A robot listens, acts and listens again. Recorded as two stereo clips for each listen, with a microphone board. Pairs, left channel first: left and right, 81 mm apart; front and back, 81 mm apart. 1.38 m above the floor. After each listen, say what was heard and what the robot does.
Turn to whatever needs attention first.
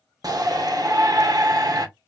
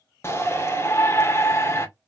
The shout: 55° right. Turn 55° right.
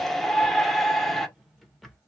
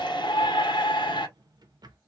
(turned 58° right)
Facing the shout.